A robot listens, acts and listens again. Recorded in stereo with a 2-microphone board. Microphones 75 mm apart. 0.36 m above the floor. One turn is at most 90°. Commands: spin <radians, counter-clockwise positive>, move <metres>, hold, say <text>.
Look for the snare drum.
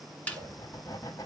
spin 0.35
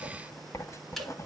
hold
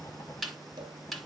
say Facing the snare drum.